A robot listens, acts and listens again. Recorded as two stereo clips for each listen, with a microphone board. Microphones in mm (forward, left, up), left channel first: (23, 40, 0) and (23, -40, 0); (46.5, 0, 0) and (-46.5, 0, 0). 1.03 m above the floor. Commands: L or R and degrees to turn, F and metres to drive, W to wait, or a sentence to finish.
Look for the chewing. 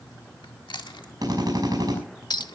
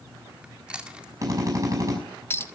L105
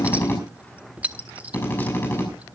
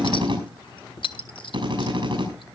W
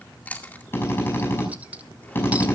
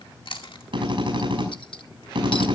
L20
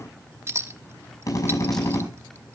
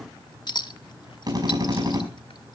W
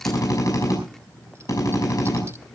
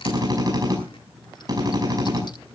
W
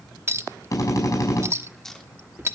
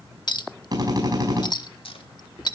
Found it: chewing, straight ahead.